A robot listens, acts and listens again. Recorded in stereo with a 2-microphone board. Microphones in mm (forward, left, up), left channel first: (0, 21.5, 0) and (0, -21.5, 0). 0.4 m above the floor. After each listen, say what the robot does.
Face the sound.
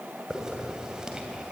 Turn 15° right.
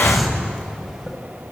Facing the hiss.